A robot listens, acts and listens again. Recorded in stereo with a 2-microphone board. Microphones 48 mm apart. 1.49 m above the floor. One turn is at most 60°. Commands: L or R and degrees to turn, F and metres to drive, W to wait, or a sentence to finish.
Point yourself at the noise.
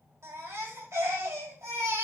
R60
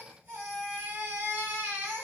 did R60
R30
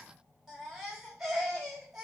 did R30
Found it: a baby crying, straight ahead, over 4 m away.